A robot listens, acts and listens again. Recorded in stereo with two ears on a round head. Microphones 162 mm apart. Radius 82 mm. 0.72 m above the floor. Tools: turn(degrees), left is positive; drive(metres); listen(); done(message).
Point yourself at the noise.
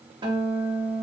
turn(degrees=-25)
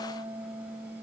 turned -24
turn(degrees=-130)
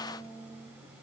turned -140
turn(degrees=10)
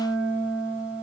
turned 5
done("Found it: a guitar, straight ahead.")